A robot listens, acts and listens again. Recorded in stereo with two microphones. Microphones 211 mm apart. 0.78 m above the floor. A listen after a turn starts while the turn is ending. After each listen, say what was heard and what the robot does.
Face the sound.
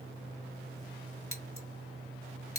Turn 90° left.
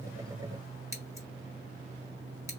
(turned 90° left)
So it is at 15° right. Turn 15° right.
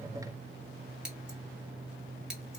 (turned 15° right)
Found it: scissors, straight ahead.